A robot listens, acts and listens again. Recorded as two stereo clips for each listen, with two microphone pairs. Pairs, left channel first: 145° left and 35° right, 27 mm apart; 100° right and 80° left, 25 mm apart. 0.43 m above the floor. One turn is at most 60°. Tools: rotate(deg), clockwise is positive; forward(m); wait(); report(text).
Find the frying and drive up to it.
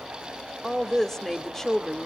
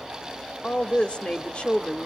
wait()
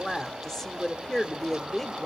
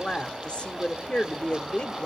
wait()
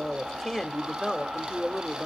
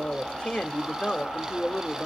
report("I can't make out frying to turn to.")